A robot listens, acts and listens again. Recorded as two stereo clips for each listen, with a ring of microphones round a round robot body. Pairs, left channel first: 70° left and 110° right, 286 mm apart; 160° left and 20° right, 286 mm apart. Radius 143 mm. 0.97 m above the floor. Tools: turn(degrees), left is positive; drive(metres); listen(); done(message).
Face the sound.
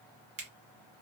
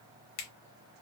turn(degrees=180)
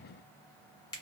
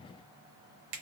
turn(degrees=-10)
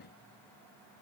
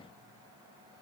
listen()
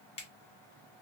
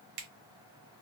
done("Found it: a finger snap, straight ahead.")